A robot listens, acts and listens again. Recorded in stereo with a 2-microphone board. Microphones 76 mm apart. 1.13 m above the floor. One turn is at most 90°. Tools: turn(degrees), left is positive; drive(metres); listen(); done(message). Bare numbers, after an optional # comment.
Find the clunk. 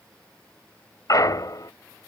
# The clunk: about 60° left or 120° left.
turn(60)
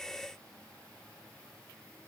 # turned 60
listen()
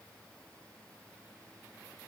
done("I heard a clunk, but can't make it out now. It was about straight ahead or 60° left.")